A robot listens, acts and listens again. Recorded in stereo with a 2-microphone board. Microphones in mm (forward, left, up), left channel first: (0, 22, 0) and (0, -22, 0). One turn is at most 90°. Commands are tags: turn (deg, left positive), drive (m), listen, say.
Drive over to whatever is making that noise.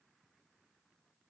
<listen/>
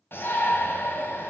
<turn deg="60"/>
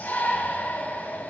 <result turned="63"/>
<turn deg="45"/>
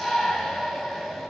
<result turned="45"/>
<drive m="1.0"/>
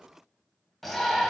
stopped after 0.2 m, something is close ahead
<say>Something is in my way. I am facing the shout but have not reached it.</say>